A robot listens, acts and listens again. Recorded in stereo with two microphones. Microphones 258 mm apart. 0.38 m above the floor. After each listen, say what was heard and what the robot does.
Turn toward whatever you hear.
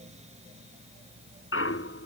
The clunk: about 55° left or 125° left. Turn 55° left.
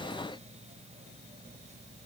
Keep listening.
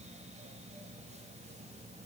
I heard a clunk, but can't make it out now. It was about straight ahead or 70° left.